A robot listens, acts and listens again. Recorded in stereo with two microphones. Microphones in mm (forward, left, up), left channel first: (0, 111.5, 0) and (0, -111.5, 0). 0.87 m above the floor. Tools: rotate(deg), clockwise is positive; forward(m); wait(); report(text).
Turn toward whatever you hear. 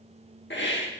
rotate(-55)
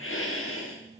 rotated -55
rotate(-65)
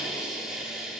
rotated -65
report("Found it: a hiss, straight ahead, 1 to 2 m away.")